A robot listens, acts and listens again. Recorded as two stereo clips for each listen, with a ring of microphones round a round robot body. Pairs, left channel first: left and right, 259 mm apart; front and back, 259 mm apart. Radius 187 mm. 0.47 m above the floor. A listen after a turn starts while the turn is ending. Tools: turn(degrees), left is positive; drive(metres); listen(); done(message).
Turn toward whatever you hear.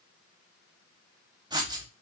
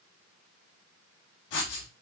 turn(degrees=-15)
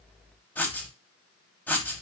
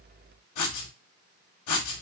done("Found it: writing, straight ahead.")